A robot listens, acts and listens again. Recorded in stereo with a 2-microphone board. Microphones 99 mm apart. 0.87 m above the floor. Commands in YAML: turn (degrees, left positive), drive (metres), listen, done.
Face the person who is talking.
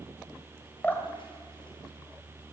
listen: true
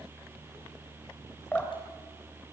listen: true
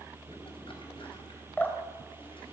done: "I can't make out anyone speaking to turn to."